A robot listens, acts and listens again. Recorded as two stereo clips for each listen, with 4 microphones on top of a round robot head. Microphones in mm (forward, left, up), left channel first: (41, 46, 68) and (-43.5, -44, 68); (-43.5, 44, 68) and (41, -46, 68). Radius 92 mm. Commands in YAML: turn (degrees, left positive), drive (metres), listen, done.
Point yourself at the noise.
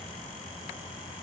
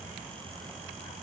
listen: true
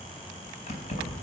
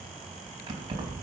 turn: 10
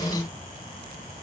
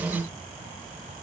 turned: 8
listen: true
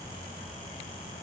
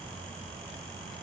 listen: true
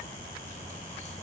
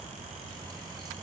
done: "Facing where the keys jangling came from. I can't hear it now."